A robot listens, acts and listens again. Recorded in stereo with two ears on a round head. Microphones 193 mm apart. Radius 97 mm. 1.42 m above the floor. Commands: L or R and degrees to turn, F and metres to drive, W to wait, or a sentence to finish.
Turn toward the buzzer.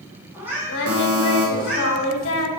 R50
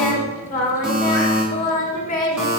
Facing the buzzer, 1 to 2 m away.